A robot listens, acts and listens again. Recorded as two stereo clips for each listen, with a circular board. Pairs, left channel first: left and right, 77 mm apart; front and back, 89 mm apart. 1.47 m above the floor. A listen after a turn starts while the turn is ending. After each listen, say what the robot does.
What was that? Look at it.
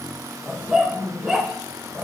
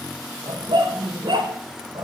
Turn 165° right.
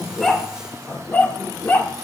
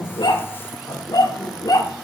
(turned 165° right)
Turn 30° left.
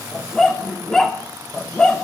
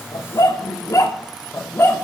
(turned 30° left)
Turn 20° left.
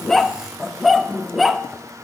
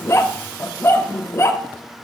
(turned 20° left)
Facing the dog barking.